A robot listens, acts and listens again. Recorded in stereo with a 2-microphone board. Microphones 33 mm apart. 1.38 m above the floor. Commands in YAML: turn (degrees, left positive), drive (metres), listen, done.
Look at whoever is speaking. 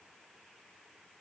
listen: true
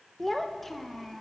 turn: 30
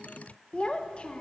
turn: 145
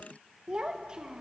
turn: -20
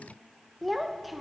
done: "Facing the child speaking."